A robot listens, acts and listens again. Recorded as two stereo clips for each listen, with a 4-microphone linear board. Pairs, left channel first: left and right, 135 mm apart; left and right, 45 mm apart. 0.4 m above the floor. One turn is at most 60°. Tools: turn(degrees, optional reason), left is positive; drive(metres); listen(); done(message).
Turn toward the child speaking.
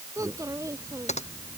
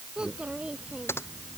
turn(degrees=-25, reason="The child speaking: about 25° right or 155° right.")
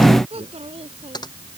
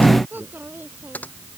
turn(degrees=-60, reason="So it is at 130° right.")
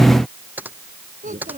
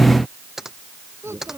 turn(degrees=-60, reason="The child speaking is now 85° right.")
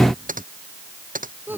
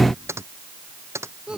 turn(degrees=-15, reason="The child speaking is now 15° right.")
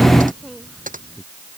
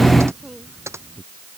done("Found it: a child speaking, straight ahead.")